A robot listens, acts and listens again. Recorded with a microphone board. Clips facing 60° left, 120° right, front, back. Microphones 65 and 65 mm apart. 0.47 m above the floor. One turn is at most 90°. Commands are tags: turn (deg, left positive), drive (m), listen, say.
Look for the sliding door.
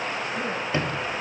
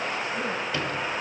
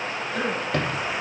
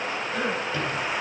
<say>Facing the sliding door.</say>